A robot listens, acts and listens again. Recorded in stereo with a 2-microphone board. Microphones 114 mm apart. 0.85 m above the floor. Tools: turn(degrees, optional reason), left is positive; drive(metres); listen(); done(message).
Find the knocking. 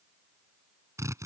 listen()
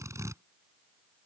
listen()
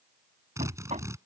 turn(degrees=-90)
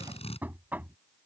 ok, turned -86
turn(degrees=-15, reason="So it is at 15° right.")
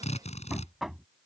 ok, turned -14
done("Found it: knocking, straight ahead.")